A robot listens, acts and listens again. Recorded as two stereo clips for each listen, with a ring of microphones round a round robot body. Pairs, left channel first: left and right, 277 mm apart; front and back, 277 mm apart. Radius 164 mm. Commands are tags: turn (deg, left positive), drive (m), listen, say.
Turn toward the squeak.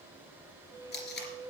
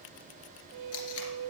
<turn deg="-170"/>
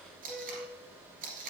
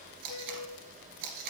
<say>Found it: a squeak, straight ahead, 1 to 2 m away.</say>